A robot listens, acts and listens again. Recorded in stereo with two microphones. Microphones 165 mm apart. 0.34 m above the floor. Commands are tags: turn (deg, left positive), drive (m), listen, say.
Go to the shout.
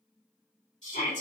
<turn deg="45"/>
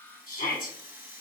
<turn deg="80"/>
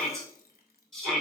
<drive m="1.0"/>
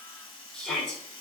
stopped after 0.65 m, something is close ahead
<say>I am next to the shout.</say>